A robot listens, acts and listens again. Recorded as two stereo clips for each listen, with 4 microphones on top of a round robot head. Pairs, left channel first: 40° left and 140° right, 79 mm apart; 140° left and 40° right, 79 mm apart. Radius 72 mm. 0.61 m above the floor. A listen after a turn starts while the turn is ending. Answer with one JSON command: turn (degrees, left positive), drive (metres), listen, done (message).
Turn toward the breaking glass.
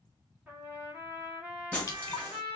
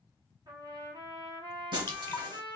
{"turn": -30}
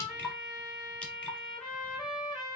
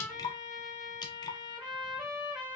{"done": "Facing where the breaking glass came from. I can't hear it now."}